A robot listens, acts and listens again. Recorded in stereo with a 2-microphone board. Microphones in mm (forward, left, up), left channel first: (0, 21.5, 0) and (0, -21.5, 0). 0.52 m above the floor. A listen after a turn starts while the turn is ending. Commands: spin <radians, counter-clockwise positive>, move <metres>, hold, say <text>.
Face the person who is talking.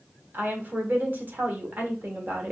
spin -0.87
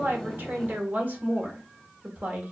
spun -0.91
spin -1.05
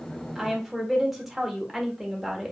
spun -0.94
say Found it: a woman speaking, straight ahead, 1 to 2 m away.